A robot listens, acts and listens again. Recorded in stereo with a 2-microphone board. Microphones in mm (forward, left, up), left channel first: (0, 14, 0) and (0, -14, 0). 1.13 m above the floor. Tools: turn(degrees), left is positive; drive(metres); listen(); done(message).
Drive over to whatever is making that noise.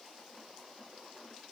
listen()
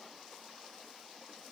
listen()
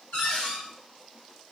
turn(degrees=65)
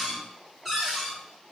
drive(metres=1.0)
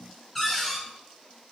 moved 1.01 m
drive(metres=1.0)
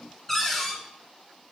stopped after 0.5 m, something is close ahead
turn(degrees=10)
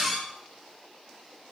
done("I am next to the cupboard door.")